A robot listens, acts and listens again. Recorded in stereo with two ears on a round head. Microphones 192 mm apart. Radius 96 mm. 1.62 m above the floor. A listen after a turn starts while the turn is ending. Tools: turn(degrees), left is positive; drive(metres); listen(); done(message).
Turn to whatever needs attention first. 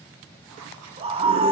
turn(degrees=-25)
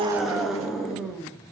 done("Found it: a scream, straight ahead.")